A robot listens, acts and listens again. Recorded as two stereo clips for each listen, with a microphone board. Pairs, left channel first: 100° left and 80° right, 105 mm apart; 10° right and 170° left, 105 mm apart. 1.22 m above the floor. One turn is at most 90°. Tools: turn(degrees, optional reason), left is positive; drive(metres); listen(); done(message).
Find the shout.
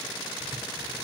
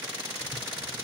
listen()
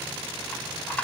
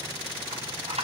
listen()
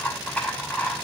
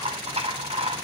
done("I can't make out a shout to turn to.")